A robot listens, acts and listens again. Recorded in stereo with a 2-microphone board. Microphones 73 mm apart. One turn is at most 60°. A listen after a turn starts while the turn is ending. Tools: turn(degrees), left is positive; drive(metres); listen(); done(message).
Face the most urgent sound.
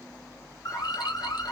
turn(degrees=50)
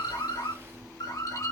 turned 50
turn(degrees=60)
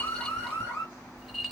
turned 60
turn(degrees=35)
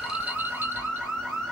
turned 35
done("Found it: an alarm, straight ahead.")